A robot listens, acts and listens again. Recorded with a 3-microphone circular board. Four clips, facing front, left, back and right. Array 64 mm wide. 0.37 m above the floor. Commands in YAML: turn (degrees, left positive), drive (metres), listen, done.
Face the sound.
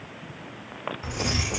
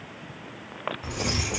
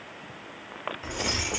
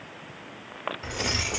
turn: -110
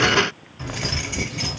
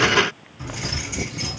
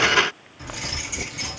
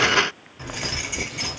turn: -60
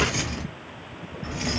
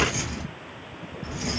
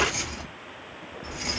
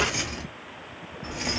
turn: -55
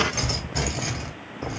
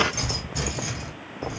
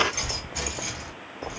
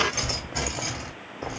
turn: -35
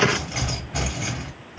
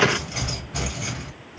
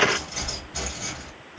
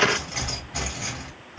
done: "Found it: keys jangling, straight ahead, 1 to 2 m away."